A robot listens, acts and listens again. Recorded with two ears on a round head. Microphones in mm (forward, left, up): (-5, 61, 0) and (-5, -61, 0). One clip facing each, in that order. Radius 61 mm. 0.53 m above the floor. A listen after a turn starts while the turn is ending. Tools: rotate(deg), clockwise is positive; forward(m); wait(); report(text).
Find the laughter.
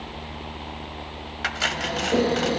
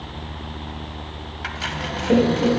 rotate(55)
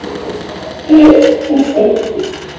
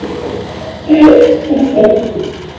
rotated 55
report("Found it: laughter, straight ahead.")